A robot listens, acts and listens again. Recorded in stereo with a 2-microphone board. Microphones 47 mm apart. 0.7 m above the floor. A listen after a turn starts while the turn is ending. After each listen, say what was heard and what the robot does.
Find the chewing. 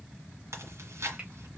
Turn 90° right.
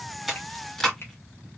Facing the chewing.